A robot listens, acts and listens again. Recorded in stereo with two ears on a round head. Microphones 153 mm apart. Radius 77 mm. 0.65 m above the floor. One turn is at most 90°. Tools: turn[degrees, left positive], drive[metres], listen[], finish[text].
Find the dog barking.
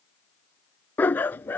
Action: turn[30]
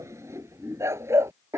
Thought: So it is at 15° right.
Action: turn[-15]
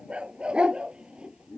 Action: finish[Facing the dog barking.]